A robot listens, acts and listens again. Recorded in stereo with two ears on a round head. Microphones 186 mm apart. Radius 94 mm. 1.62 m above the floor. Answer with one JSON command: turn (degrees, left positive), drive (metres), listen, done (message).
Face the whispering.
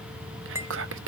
{"turn": -60}
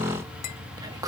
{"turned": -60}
{"turn": -20}
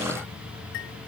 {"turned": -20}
{"listen": true}
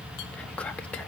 {"done": "Facing the whispering, under 1 m away."}